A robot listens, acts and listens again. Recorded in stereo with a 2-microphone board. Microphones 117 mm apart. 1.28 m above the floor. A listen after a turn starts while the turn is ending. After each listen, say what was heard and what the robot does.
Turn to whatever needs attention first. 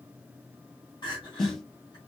The crying: about 40° left or 140° left. Turn 40° left.
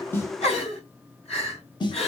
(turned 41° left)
So it is at 100° left. Turn 100° left.
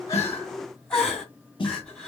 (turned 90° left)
The crying is now 10° left. Turn 10° left.
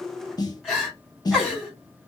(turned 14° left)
Found it: crying, straight ahead, 2 to 4 m away.